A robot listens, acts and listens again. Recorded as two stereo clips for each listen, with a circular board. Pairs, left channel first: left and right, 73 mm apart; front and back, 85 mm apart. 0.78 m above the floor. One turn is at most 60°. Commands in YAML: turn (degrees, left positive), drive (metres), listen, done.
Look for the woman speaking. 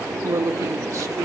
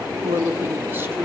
turn: -60
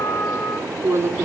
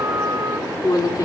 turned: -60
turn: -35
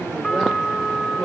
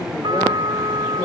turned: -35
turn: 10
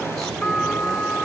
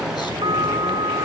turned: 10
listen: true
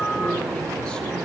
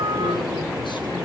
listen: true
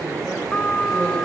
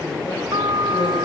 done: "I heard a woman speaking from this way, but can't make it out now."